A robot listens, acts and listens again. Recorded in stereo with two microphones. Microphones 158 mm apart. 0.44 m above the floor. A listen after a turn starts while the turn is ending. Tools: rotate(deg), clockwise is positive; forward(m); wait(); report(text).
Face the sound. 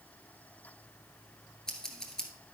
rotate(-30)
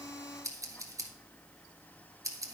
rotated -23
rotate(20)
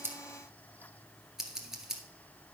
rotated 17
report("Found it: scissors, straight ahead, 1 to 2 m away.")